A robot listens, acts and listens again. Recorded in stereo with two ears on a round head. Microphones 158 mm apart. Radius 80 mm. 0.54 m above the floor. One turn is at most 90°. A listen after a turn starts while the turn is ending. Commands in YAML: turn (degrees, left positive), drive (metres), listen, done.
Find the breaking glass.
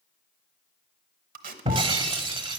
turn: -30
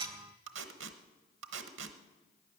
listen: true
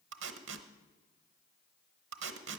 done: "I heard breaking glass, but can't make it out now. It was about straight ahead or 120° right."